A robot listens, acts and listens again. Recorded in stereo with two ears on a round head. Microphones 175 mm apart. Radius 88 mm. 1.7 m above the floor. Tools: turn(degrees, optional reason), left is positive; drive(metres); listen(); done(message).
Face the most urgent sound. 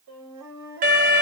turn(degrees=-45, reason="The alarm: about 45° right or 135° right.")
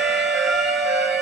done("Found it: an alarm, straight ahead, under 1 m away.")